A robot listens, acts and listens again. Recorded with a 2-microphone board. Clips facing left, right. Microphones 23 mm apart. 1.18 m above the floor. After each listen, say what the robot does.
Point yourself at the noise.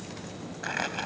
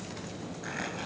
Turn 45° left.
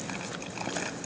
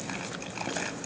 Found it: crumpling, straight ahead.